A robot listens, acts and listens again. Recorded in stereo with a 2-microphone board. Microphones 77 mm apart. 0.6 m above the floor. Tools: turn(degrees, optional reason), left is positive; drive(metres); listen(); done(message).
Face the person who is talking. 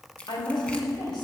turn(degrees=65, reason="The woman speaking: about 65° left or 115° left.")
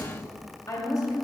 turn(degrees=45, reason="So it is at 45° left.")
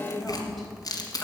done("Facing the woman speaking, 2 to 4 m away.")